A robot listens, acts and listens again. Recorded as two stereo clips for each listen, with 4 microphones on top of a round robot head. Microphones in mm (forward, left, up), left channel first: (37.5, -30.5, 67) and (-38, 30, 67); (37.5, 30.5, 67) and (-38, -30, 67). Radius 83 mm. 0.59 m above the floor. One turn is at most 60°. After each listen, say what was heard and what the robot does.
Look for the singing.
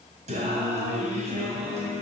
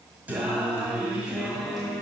The singing: 130° left. Turn 60° left.
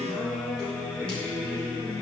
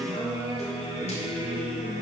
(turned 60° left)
The singing is now 40° left. Turn 40° left.
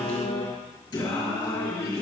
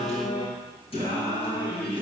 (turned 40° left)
The singing is now 10° left. Turn 10° left.
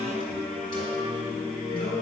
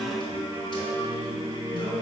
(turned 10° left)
Facing the singing.